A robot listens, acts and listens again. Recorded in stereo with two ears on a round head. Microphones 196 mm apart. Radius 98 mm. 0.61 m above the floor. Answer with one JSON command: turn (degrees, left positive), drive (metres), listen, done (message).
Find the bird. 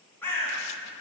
{"turn": 30}
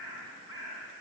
{"turn": -15}
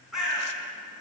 {"done": "Facing the bird."}